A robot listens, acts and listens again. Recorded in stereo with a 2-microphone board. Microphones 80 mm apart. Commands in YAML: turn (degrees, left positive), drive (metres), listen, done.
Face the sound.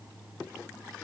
listen: true
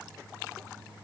listen: true
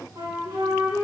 turn: -60
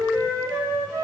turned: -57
turn: -60
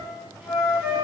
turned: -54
turn: -10
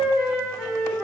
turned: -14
done: "Found it: a flute, straight ahead, 2 to 4 m away."